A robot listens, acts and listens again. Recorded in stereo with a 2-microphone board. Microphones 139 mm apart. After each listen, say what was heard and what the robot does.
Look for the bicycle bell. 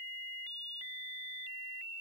Keep listening.
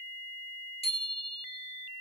The bicycle bell: about 45° left or 135° left. Turn 45° left.
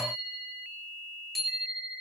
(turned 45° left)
Facing the bicycle bell, over 4 m away.